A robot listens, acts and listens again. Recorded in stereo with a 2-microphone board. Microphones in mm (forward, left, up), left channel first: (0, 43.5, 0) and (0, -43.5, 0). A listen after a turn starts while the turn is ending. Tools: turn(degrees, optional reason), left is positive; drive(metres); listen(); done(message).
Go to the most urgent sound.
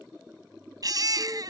turn(degrees=-50, reason="The baby crying: about 50° right or 130° right.")
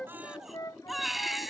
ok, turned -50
drive(metres=1.0)
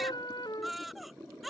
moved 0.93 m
drive(metres=1.0)
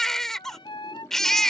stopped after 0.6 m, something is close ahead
done("Arrived at the baby crying, straight ahead.")